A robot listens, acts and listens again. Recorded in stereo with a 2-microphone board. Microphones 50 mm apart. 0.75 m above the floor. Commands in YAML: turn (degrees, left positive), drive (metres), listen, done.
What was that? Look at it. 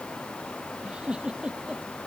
turn: -20
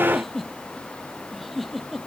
done: "Found it: a giggle, straight ahead."